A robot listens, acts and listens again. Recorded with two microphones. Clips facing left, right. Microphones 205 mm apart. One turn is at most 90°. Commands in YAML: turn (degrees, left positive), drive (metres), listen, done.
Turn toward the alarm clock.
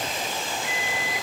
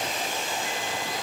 turn: 30
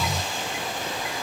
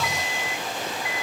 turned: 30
turn: 90
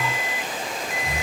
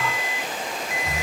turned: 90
turn: 40
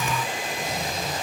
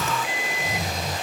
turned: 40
turn: -10
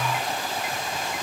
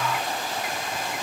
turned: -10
listen: true
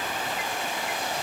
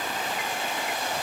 listen: true
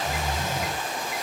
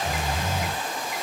done: "Facing where the alarm clock came from. I can't hear it now."